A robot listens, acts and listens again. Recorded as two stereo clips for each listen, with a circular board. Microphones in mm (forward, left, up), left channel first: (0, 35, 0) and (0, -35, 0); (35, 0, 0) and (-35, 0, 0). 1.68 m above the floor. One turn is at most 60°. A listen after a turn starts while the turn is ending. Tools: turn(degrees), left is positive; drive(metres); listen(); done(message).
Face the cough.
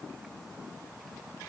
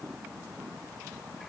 listen()
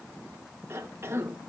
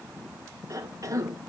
turn(degrees=-60)
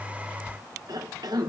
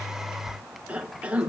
turn(degrees=-60)
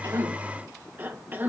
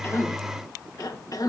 turn(degrees=-30)
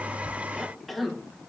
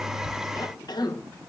done("Facing the cough, 1 to 2 m away.")